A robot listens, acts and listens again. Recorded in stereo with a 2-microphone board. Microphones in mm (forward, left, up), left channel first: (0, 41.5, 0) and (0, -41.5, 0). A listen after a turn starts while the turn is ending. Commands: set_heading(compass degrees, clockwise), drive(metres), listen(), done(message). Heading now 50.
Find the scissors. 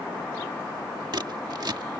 set_heading(110)
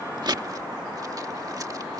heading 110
listen()
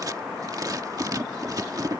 set_heading(165)
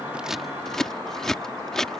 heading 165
done("Facing the scissors.")